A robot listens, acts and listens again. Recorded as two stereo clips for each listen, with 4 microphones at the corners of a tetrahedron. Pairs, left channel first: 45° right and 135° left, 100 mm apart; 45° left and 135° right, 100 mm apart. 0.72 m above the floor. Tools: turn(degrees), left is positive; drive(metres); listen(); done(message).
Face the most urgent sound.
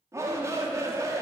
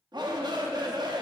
turn(degrees=-170)
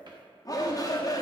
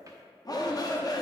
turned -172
done("Found it: a shout, straight ahead.")